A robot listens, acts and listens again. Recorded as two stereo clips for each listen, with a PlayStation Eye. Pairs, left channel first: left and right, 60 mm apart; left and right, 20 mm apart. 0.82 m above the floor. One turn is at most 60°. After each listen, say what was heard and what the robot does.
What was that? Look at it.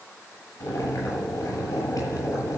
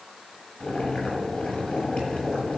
The boiling: about 65° left or 115° left. Turn 60° left.
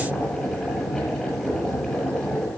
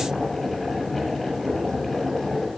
Found it: boiling, straight ahead, over 4 m away.